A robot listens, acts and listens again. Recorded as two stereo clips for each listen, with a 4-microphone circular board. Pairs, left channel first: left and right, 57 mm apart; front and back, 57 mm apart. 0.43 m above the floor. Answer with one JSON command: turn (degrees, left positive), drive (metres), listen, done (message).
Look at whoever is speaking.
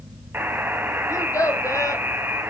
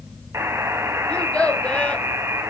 {"turn": 70}
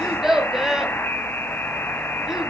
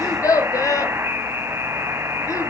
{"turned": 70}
{"turn": -10}
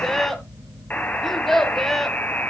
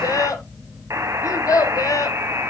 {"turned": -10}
{"done": "Found it: a child speaking, straight ahead."}